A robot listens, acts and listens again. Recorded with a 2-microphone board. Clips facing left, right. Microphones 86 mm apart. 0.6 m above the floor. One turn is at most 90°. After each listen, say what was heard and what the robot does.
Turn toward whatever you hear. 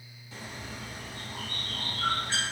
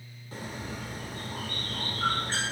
The bird: about 45° right or 135° right. Turn 45° right.
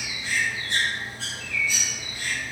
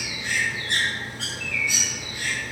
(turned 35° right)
So it is at 100° right. Turn 90° right.
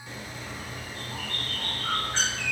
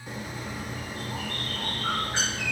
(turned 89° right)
The bird is now 15° right. Turn 15° right.
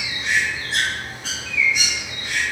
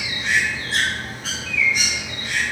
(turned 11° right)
Found it: a bird, straight ahead.